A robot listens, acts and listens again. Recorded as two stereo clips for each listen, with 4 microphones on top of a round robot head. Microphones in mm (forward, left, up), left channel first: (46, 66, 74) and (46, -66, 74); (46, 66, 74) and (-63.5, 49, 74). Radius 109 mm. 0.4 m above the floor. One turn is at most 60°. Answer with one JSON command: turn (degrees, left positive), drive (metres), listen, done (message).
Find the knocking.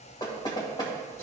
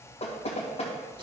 {"turn": 35}
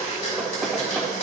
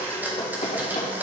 {"done": "Found it: knocking, straight ahead, 2 to 4 m away."}